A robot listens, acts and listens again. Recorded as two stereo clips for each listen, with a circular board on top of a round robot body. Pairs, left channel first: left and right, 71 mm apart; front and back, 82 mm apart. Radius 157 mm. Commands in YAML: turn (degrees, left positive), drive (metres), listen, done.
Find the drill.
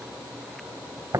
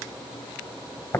listen: true
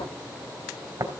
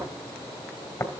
listen: true
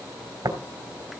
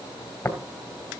done: "I can't make out a drill, only tapping."